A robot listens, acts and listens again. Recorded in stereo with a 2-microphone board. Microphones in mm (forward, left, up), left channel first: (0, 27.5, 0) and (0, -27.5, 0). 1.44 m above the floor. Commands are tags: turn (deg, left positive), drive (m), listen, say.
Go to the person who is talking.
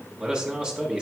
<turn deg="-30"/>
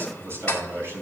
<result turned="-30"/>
<turn deg="-135"/>
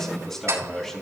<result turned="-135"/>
<drive m="1.0"/>
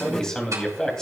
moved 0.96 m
<turn deg="10"/>
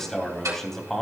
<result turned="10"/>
<drive m="1.0"/>
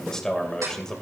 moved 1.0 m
<drive m="1.0"/>
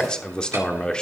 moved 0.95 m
<turn deg="10"/>
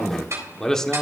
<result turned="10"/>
<drive m="1.0"/>
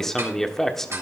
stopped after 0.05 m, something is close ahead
<say>I am next to the man speaking.</say>